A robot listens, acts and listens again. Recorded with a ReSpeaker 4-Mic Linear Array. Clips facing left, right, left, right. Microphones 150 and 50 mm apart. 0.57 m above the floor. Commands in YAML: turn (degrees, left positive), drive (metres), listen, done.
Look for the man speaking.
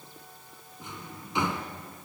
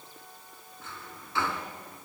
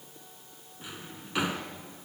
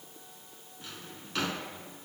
listen: true
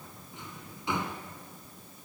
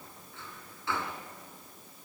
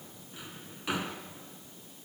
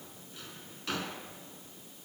listen: true
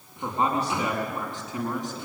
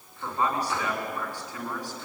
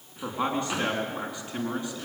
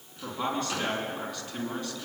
turn: 20
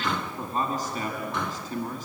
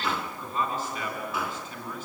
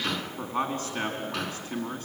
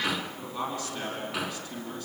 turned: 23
turn: 140
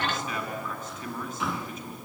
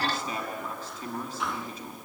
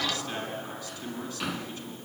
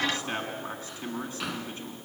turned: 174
turn: -35
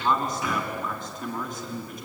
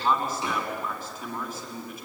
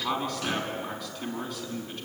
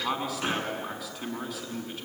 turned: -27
done: "Found it: a man speaking, straight ahead, over 4 m away."